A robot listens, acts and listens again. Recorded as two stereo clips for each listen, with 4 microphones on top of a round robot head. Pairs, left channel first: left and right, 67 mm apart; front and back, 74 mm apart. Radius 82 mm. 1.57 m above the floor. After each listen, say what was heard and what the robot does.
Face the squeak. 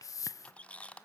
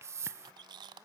The squeak: 160° left. Turn 160° left.
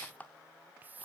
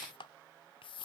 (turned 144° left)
The squeak is now 15° left. Turn 15° left.
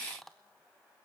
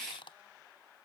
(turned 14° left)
Found it: a squeak, straight ahead, 1 to 2 m away.